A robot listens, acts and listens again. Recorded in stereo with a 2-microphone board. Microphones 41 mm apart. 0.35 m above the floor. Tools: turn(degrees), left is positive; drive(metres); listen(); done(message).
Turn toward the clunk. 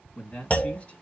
turn(degrees=35)
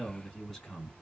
listen()
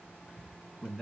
done("I heard a clunk, but can't make it out now. It was about straight ahead or 110° left.")